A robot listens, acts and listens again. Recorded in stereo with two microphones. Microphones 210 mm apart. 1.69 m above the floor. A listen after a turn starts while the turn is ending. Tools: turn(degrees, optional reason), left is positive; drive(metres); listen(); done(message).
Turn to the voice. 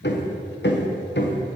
listen()
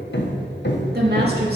turn(degrees=-50, reason="The woman speaking: about 50° right or 130° right.")
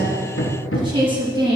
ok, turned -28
turn(degrees=-25, reason="So it is at 25° right.")
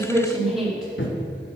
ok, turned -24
done("Found it: a woman speaking, straight ahead.")